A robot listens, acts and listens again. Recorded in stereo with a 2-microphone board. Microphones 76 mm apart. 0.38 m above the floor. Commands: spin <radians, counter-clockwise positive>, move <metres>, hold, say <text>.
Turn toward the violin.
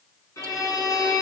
spin 0.79
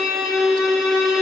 say Facing the violin, over 4 m away.